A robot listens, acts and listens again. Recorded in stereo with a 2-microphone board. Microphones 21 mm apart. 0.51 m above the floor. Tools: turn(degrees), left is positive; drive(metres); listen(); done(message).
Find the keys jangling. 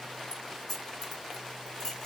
turn(degrees=30)
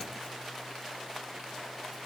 listen()
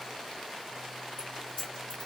turn(degrees=135)
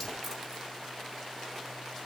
listen()
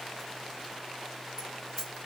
done("Found it: keys jangling, straight ahead.")